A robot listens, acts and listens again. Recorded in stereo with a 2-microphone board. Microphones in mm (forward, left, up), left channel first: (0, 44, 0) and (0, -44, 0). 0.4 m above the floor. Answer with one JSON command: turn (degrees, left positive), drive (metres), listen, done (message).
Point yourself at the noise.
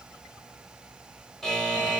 {"turn": 30}
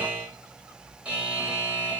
{"turn": -20}
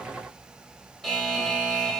{"done": "Facing the buzzer, 1 to 2 m away."}